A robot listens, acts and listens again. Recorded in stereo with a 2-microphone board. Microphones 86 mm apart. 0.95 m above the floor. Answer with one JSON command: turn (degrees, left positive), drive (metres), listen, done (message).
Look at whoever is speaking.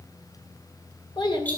{"turn": 65}
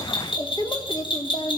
{"turn": 75}
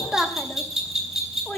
{"turn": 20}
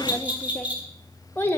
{"turn": 30}
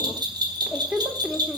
{"turn": -10}
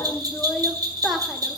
{"done": "Facing the child speaking."}